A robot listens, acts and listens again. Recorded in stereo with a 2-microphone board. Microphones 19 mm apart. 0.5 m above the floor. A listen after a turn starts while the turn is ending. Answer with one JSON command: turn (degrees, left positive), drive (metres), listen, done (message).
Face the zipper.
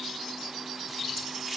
{"listen": true}
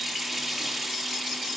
{"listen": true}
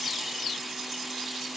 {"done": "I can't make out a zipper, only a running tap."}